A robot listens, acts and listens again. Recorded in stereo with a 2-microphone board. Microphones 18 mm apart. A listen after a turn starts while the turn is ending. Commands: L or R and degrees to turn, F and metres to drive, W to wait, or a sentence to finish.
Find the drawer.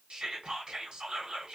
W
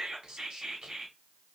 W
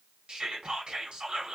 I can't make out a drawer, only whispering.